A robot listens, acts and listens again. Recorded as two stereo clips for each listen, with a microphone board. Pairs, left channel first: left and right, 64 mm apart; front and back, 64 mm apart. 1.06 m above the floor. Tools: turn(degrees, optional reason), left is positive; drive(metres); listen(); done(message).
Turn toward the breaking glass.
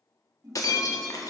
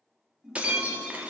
turn(degrees=110, reason="The breaking glass: 110° left.")
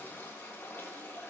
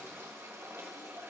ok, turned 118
turn(degrees=-10, reason="Nothing new. It was at 10° right.")
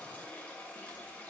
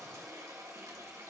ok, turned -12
done("Facing where the breaking glass came from. I can't hear it now.")